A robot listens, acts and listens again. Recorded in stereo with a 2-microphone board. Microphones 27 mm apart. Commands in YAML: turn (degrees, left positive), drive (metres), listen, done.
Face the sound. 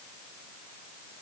listen: true
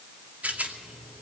turn: -70
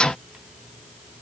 listen: true
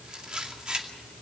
turn: -30
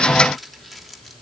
done: "Facing the rattle."